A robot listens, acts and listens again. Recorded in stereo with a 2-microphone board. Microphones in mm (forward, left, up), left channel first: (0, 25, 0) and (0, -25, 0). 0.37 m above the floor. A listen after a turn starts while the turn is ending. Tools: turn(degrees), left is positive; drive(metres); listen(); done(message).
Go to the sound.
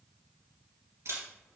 turn(degrees=-70)
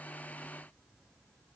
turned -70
listen()
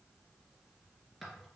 drive(metres=1.0)
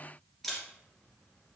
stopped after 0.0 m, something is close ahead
done("Blocked. The camera shutter is further on, straight ahead.")